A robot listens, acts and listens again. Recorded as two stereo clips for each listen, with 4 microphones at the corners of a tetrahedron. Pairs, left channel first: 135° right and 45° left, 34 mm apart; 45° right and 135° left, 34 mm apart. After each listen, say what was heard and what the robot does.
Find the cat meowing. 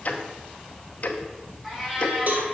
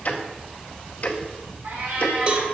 The cat meowing: 125° left. Turn 125° left.
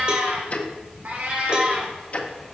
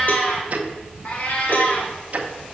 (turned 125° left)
The cat meowing is now 15° right. Turn 15° right.
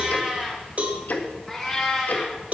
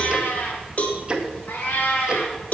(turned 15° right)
The cat meowing is now 50° right. Turn 50° right.
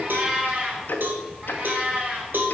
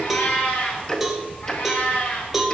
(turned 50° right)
Facing the cat meowing, 1 to 2 m away.